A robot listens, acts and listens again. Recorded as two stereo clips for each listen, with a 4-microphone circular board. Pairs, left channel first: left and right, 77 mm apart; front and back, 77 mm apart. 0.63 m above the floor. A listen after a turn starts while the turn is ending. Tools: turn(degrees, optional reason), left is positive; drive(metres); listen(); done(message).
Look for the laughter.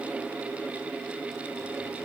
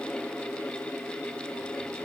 listen()
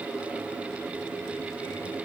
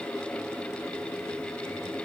listen()
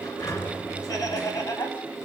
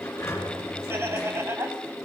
turn(degrees=125, reason="The laughter: 125° left.")
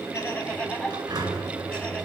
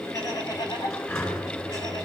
turn(degrees=20, reason="The laughter is now 20° left.")
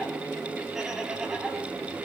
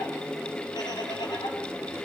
listen()
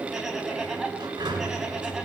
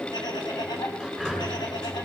done("Facing the laughter, over 4 m away.")